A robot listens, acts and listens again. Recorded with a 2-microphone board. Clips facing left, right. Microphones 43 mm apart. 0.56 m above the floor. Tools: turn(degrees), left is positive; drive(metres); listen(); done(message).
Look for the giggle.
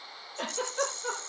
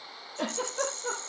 turn(degrees=20)
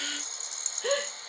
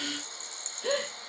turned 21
turn(degrees=140)
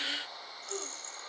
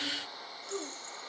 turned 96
turn(degrees=45)
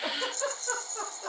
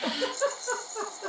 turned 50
done("Facing the giggle, over 4 m away.")